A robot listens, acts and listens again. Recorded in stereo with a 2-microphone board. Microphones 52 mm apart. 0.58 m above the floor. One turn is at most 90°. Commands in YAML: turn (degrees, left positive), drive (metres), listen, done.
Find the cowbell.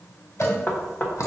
turn: 50
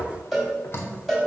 done: "Facing the cowbell, 2 to 4 m away."